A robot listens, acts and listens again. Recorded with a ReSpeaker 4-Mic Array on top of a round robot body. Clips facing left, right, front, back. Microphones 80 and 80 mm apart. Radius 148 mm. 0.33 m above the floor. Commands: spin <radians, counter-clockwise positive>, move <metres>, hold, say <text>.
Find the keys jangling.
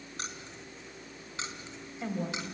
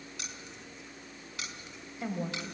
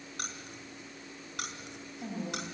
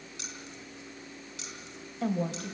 spin 0.52
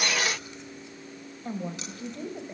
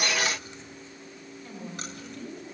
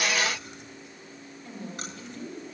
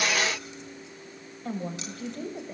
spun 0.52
hold
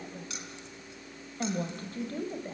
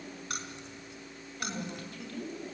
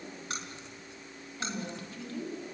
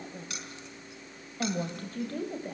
spin -0.96
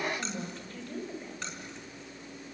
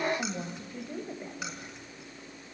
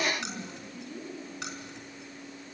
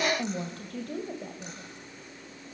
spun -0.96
hold
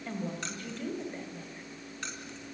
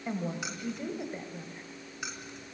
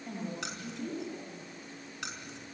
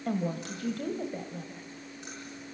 spin -0.17
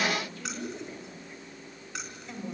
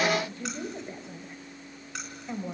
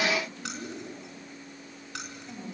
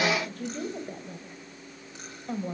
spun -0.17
say Facing the keys jangling, over 4 m away.